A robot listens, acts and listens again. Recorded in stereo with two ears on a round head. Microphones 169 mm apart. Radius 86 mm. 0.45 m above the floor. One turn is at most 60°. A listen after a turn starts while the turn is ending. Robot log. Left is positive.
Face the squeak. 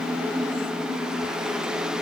cmd idle
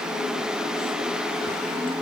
cmd idle
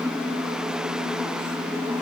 end: I can't make out a squeak to turn to.